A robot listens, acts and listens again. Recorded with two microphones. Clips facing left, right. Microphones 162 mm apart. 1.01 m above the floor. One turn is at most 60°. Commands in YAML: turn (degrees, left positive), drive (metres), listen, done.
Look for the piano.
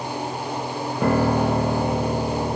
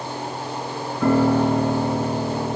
turn: 50
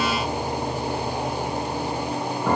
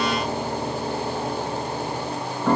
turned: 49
done: "Facing the piano, 1 to 2 m away."